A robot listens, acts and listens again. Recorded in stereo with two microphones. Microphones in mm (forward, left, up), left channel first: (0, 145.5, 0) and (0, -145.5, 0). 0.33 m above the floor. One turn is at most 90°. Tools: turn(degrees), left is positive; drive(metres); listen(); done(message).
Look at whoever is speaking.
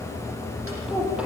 turn(degrees=-30)
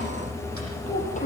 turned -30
turn(degrees=25)
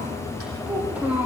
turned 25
done("Facing the child speaking, over 4 m away.")